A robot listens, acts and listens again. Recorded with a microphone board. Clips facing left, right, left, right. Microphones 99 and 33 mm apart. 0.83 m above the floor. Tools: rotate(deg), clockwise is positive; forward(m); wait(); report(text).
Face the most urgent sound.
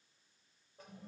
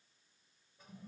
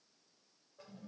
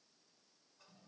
wait()
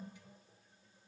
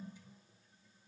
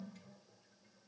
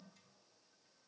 wait()
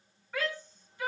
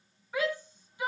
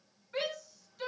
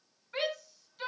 rotate(30)
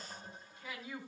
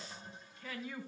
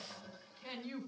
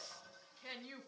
rotate(-20)
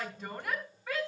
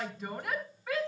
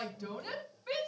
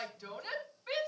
report("Found it: a shout, straight ahead, over 4 m away.")